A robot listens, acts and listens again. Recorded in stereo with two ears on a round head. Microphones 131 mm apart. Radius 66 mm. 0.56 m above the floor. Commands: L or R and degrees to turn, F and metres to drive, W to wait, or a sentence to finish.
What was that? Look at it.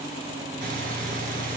R65
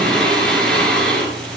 Facing the breathing.